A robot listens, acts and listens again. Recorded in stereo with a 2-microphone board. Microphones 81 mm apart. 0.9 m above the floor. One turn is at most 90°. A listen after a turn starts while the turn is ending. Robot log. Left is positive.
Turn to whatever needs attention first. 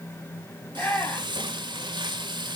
note: The shout: about 25° left or 155° left.
cmd yaw +25
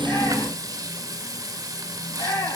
note: So it is at 130° left.
cmd yaw +90
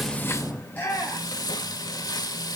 note: The shout is now 20° left.
cmd yaw +20
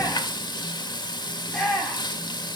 note: The shout is now 10° left.
cmd yaw +10
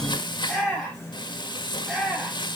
end: Found it: a shout, straight ahead, over 4 m away.